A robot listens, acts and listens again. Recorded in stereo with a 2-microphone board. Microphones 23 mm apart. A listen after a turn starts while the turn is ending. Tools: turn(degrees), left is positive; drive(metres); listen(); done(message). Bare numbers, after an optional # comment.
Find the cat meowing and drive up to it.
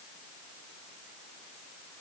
listen()
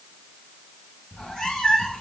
# The cat meowing: about 30° left or 150° left.
turn(30)
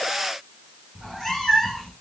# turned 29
drive(1.0)
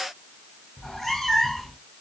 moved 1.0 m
# The cat meowing is now 10° left.
turn(10)
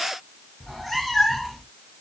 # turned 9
drive(1.0)
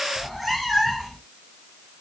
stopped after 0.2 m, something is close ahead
done("I am next to the cat meowing.")